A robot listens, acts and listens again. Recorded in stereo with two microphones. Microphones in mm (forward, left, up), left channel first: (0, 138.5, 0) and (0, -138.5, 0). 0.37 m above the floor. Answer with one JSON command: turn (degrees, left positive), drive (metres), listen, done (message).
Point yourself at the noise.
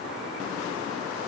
{"listen": true}
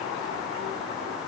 {"listen": true}
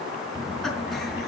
{"turn": 30}
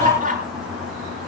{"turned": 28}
{"turn": -30}
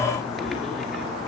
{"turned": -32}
{"done": "Found it: laughter, straight ahead, over 4 m away."}